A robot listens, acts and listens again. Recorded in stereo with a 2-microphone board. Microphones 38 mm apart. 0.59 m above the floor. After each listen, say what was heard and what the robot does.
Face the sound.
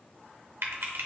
Turn 90° right.
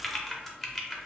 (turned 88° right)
Found it: typing on a keyboard, straight ahead, under 1 m away.